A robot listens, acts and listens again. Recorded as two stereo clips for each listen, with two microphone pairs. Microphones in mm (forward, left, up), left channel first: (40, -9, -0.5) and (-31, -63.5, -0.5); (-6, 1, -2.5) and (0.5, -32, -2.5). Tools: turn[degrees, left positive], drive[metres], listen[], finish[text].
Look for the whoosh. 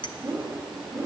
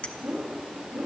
Thought: The whoosh: 50° right.
Action: turn[-50]
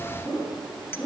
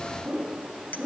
Action: finish[Found it: a whoosh, straight ahead, 2 to 4 m away.]